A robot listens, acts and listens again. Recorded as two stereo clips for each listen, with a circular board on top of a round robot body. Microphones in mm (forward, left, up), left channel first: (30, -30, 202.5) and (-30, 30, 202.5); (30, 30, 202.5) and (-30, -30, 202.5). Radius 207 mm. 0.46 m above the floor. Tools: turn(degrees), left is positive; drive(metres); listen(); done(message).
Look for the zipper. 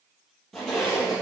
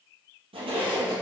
turn(degrees=-130)
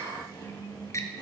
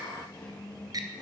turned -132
done("Found it: a zipper, straight ahead, 2 to 4 m away.")